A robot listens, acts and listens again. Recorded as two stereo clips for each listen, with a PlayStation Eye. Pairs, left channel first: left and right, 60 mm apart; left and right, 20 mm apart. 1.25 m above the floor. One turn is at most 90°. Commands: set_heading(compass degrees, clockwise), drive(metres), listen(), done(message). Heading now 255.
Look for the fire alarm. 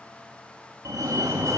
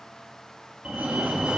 set_heading(325)
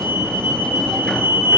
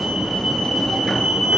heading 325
set_heading(0)
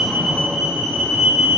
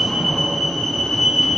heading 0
set_heading(10)
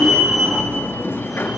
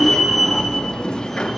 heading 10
done("Facing the fire alarm, 2 to 4 m away.")